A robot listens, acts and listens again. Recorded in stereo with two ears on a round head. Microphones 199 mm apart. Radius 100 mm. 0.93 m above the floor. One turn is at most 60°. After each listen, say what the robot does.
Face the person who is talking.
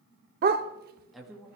Turn 30° right.
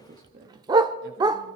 Turn 60° right.
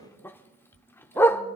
Turn 60° right.
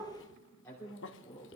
Turn 15° left.
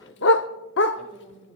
Found it: a woman speaking, straight ahead, 2 to 4 m away.